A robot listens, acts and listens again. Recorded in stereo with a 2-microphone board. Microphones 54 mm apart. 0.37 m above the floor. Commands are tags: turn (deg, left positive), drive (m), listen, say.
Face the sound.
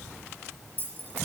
<turn deg="40"/>
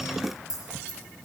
<turn deg="100"/>
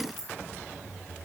<say>Found it: keys jangling, straight ahead.</say>